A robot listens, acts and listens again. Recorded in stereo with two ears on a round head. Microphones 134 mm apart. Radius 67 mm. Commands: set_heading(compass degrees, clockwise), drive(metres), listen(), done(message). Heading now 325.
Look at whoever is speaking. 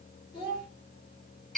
set_heading(290)
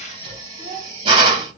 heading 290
done("Found it: a child speaking, straight ahead, 1 to 2 m away.")